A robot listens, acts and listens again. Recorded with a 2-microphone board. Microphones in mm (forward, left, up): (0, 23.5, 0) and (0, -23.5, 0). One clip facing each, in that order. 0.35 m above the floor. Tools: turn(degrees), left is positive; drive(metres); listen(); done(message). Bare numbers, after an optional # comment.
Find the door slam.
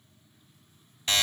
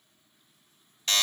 listen()
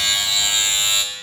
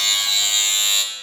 listen()
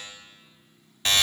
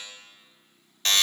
done("I can't make out a door slam, only a buzzer.")